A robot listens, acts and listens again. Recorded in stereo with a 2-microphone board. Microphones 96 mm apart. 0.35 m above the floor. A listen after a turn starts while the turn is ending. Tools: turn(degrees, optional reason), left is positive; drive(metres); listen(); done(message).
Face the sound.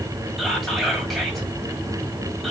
turn(degrees=30)
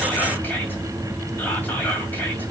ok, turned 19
turn(degrees=160, reason="So it is at 160° left.")
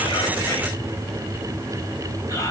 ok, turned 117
turn(degrees=40, reason="The whispering is now 40° left.")
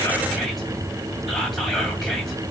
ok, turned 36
done("Found it: whispering, straight ahead, 1 to 2 m away.")